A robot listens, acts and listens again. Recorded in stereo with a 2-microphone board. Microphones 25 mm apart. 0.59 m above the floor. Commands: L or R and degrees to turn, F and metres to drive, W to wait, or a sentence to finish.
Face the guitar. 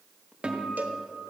R40
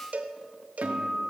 R95
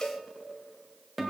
Found it: a guitar, straight ahead, 2 to 4 m away.